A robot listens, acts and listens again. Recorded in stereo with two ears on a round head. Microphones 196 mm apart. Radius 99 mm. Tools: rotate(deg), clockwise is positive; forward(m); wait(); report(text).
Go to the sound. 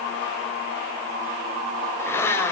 rotate(-30)
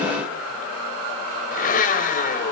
rotate(-140)
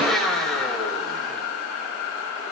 forward(1.0)
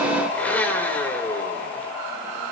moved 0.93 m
forward(1.0)
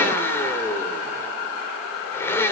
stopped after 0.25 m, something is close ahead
rotate(-10)
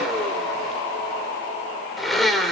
report("Blocked. The blender is further on, straight ahead.")